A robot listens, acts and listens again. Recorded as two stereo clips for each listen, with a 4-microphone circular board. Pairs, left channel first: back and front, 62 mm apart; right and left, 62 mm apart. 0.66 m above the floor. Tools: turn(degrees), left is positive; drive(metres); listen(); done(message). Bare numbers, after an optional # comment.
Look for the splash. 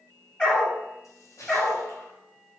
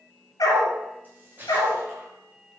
# The splash: 150° left.
turn(150)
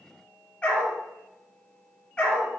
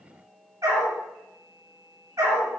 done("Facing where the splash came from. I can't hear it now.")